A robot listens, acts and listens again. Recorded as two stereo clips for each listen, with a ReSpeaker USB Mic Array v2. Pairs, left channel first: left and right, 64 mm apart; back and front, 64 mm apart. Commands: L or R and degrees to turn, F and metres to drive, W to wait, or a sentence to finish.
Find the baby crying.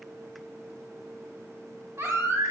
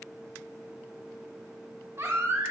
R45
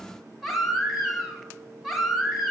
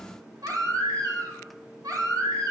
Found it: a baby crying, straight ahead, 1 to 2 m away.